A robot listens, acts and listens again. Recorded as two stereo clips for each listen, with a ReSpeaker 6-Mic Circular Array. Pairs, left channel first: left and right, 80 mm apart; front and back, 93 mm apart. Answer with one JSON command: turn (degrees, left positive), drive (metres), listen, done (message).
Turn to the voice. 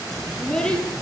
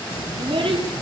{"turn": 170}
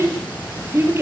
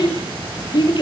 {"turn": -35}
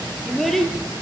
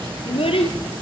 {"done": "Found it: a child speaking, straight ahead."}